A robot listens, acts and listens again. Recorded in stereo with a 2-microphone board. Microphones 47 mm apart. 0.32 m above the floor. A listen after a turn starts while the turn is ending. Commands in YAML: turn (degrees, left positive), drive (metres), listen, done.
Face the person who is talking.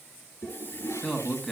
turn: 30
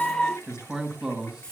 turn: -20
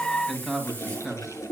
done: "Facing the man speaking."